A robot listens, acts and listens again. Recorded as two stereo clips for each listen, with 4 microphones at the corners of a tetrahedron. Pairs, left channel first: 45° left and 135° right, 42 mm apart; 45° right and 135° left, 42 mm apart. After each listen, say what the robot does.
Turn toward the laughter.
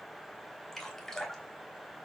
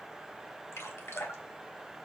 Keep listening.
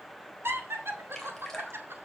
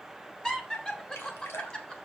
Turn 115° right.
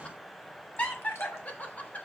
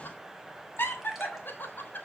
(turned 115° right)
Turn 10° right.
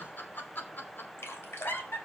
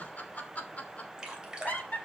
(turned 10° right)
Facing the laughter, 2 to 4 m away.